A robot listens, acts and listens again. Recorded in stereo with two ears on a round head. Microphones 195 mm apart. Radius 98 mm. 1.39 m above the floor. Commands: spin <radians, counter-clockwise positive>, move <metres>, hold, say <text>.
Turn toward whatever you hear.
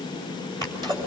spin -0.35
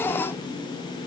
hold
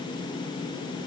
say I heard a sneeze, but can't make it out now. It was about straight ahead or 140° right.